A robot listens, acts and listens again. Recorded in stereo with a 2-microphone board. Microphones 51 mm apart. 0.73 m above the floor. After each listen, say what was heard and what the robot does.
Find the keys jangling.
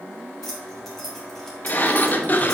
Turn 30° left.
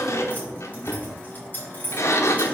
So it is at 145° left. Turn 145° left.
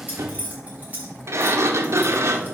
The keys jangling is now 30° right. Turn 30° right.
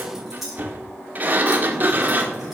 Found it: keys jangling, straight ahead.